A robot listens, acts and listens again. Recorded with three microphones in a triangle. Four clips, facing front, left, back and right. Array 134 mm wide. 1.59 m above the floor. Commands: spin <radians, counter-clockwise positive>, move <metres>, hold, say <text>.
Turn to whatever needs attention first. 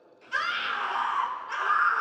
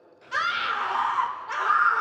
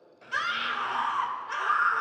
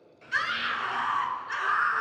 spin 1.66
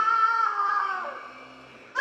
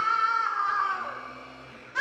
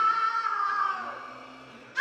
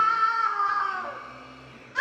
say Found it: a scream, straight ahead.